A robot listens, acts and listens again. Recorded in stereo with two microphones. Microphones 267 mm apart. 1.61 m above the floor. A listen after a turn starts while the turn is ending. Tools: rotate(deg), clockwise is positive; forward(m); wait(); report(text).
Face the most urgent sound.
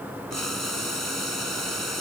wait()
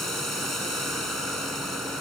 wait()
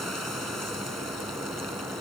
report("I can't make out anything urgent to turn to.")